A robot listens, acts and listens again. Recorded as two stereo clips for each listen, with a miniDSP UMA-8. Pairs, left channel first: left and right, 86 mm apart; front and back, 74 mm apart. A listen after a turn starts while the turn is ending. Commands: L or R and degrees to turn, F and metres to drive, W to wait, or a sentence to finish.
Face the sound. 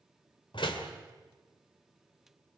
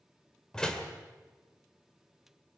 L80
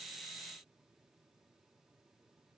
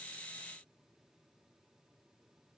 Facing where the door slam came from. I can't hear it now.